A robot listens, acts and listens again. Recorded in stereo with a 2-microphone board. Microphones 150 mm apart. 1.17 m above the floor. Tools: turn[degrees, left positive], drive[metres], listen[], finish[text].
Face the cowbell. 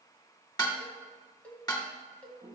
Action: turn[30]
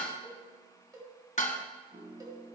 Thought: So it is at 25° right.
Action: turn[-25]
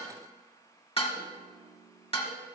Action: listen[]
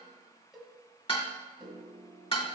Action: finish[Facing the cowbell, 1 to 2 m away.]